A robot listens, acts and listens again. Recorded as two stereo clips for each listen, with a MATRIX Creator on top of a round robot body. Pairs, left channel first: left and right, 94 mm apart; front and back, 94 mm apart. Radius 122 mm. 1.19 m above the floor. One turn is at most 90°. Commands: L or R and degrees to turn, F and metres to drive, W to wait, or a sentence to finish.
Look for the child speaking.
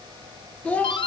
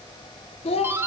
L15
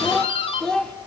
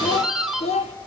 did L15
L10
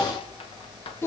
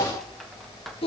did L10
L25
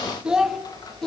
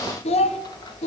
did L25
Found it: a child speaking, straight ahead, 1 to 2 m away.